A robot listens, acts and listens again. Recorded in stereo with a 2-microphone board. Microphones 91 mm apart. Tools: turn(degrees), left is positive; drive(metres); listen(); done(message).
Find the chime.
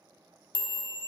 turn(degrees=60)
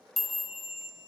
done("Facing the chime.")